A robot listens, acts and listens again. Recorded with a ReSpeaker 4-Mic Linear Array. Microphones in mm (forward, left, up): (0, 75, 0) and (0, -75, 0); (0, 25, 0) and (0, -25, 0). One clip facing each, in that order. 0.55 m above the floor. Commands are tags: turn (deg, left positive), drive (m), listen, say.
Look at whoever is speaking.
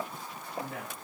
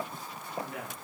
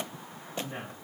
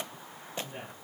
<turn deg="90"/>
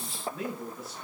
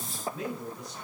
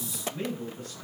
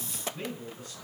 <say>Facing the man speaking, over 4 m away.</say>